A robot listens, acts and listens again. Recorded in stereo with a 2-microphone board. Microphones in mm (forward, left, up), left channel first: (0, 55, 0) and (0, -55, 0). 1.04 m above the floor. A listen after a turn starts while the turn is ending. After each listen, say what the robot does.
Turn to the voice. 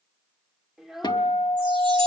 Turn 30° right.
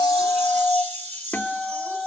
Keep listening.
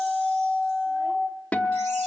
Keep listening.
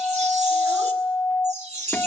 I heard a child speaking, but can't make it out now. It was about 25° left or 145° right.